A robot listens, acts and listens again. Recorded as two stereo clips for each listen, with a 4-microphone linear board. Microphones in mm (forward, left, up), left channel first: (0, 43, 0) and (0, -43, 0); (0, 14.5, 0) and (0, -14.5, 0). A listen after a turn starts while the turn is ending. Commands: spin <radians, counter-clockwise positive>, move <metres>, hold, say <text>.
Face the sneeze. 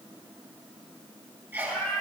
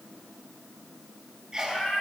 spin -0.44
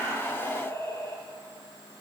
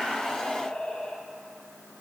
hold
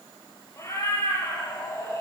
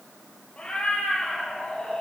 say I heard a sneeze, but can't make it out now. It was about straight ahead or 130° right.